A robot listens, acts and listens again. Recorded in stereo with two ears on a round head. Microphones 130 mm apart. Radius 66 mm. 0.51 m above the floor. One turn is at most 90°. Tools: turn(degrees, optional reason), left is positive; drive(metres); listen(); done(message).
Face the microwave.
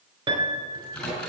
turn(degrees=30)
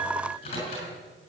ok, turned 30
turn(degrees=90, reason="So it is at 140° left.")
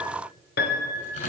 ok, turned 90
turn(degrees=55, reason="The microwave is now 55° left.")
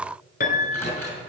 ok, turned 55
turn(degrees=15, reason="The microwave is now 15° left.")
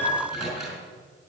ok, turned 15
done("Facing the microwave.")